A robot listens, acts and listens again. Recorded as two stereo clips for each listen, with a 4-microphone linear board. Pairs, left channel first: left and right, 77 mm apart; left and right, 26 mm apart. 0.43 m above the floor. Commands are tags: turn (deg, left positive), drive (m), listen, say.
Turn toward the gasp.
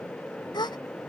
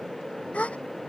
<turn deg="90"/>
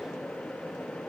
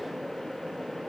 <say>I heard a gasp from this way, but can't make it out now.</say>